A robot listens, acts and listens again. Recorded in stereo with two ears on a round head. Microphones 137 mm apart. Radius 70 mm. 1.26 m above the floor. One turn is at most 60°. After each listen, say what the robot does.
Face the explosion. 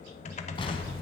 Turn 35° left.
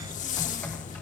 Keep listening.
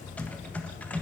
I heard an explosion, but can't make it out now. It was about straight ahead or 110° left.